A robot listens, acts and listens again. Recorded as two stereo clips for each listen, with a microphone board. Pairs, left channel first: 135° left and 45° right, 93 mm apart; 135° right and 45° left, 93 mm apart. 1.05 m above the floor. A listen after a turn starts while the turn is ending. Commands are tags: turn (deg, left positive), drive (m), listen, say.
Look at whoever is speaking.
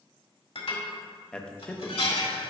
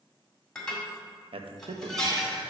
<turn deg="55"/>
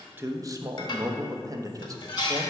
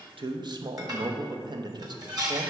<say>Facing the man speaking.</say>